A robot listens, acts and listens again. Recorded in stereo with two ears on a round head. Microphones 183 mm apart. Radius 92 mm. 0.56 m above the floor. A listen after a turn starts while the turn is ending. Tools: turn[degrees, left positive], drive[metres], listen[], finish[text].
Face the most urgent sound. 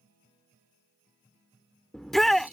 Action: turn[30]
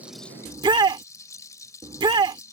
Thought: So it is at 25° right.
Action: turn[-25]
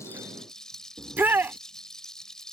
Thought: The shout is now 10° right.
Action: turn[-10]
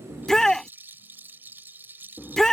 Action: finish[Found it: a shout, straight ahead.]